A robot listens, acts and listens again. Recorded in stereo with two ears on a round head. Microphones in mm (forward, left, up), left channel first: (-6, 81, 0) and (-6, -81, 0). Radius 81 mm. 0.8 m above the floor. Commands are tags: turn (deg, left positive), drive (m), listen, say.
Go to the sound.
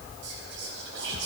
<turn deg="-70"/>
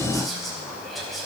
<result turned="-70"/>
<drive m="1.0"/>
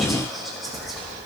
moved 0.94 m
<drive m="1.0"/>
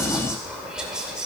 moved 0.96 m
<drive m="1.0"/>
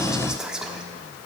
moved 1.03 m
<drive m="1.0"/>
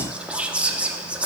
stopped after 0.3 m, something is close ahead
<say>Arrived at the whispering, straight ahead.</say>